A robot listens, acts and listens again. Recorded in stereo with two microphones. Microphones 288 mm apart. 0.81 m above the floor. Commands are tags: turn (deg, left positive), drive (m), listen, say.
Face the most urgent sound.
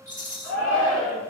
<turn deg="70"/>
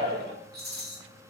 <turn deg="30"/>
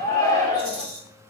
<turn deg="15"/>
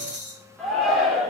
<say>Facing the shout, 2 to 4 m away.</say>